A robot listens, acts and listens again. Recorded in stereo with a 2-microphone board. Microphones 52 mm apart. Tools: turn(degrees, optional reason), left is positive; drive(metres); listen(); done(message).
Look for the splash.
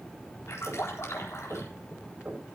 turn(degrees=60, reason="The splash: about 60° left or 120° left.")
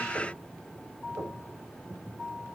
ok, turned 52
listen()
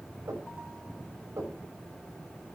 done("I heard a splash, but can't make it out now. It was about 10° left or 65° left.")